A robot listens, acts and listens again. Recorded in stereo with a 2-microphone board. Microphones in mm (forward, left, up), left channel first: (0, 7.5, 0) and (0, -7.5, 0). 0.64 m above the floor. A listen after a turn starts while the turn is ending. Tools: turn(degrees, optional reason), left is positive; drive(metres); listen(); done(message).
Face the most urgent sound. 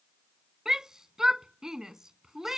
turn(degrees=-35, reason="The shout: about 35° right or 145° right.")
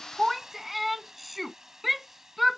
done("Found it: a shout, straight ahead.")